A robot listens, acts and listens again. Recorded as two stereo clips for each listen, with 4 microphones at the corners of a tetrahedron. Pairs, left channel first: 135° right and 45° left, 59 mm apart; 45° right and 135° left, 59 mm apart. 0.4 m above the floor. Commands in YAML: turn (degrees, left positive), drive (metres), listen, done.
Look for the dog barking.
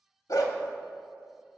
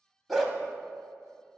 turn: -135
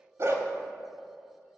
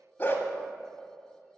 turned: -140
done: "Facing the dog barking, under 1 m away."